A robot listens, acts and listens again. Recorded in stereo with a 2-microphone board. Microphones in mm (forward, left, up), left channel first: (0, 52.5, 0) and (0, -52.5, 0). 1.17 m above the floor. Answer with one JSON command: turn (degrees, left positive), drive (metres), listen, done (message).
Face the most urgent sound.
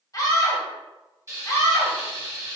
{"turn": 35}
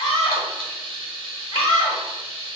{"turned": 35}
{"turn": 115}
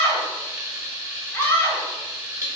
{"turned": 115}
{"turn": 20}
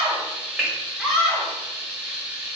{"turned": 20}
{"done": "Found it: a scream, straight ahead."}